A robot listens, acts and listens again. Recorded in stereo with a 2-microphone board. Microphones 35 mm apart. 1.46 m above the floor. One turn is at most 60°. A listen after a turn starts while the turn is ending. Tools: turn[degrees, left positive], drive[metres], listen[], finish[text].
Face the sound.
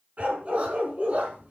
Thought: The dog barking: about 30° right or 150° right.
Action: turn[-30]
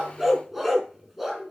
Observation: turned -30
Action: finish[Found it: a dog barking, straight ahead.]